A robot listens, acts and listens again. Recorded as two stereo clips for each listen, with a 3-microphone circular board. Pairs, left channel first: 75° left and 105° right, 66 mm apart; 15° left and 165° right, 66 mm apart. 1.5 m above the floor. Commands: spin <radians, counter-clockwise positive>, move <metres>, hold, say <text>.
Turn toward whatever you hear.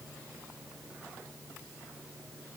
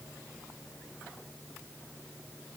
hold
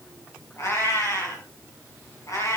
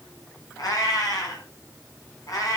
spin 0.79
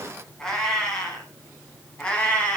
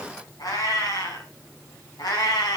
say Found it: a cat meowing, straight ahead, over 4 m away.